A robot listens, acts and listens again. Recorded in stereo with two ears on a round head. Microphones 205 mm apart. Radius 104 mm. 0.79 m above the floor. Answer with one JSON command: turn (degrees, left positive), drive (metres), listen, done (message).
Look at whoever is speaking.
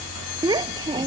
{"turn": -20}
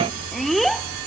{"turn": 30}
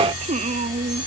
{"turn": -30}
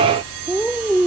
{"done": "Found it: a child speaking, straight ahead."}